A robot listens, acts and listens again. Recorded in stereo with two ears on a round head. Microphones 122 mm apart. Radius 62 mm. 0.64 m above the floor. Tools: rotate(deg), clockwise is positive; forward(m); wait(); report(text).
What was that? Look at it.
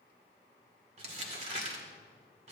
rotate(45)
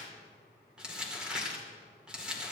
rotate(10)
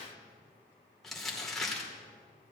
report("Facing the crumpling, 2 to 4 m away.")